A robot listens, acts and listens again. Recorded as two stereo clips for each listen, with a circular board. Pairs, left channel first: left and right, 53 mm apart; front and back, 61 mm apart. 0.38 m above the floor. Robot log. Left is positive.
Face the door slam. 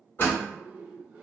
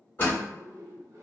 note: The door slam: 45° left.
cmd yaw +45
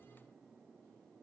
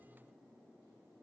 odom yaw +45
end: Facing where the door slam came from. I can't hear it now.